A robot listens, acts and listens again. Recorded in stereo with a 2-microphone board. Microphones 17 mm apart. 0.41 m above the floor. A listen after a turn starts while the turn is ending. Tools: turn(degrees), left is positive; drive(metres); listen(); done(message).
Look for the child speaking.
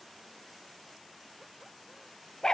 listen()
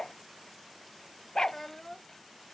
turn(degrees=20)
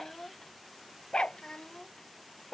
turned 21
turn(degrees=125)
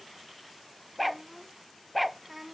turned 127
turn(degrees=-10)
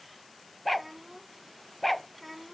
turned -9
done("Facing the child speaking.")